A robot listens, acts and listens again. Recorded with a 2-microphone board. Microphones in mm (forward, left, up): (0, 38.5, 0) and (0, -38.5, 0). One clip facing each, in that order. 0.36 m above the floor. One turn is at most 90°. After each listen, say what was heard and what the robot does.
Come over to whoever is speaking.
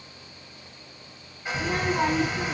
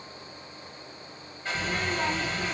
The child speaking: about 45° left or 135° left. Turn 45° left.
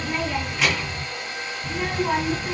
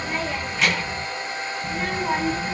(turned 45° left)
Drive 1.0 m forward.
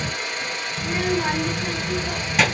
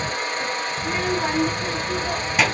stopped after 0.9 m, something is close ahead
Arrived at the child speaking, straight ahead.